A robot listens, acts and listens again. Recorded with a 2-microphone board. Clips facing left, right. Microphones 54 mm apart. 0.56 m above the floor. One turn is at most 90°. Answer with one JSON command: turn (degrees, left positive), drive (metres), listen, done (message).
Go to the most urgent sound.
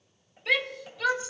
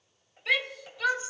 {"turn": 30}
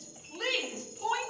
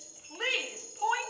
{"turn": -30}
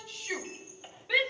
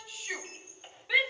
{"drive": 1.0}
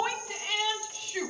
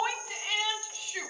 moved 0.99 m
{"drive": 1.0}
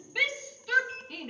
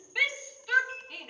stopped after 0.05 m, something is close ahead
{"done": "I am next to the shout."}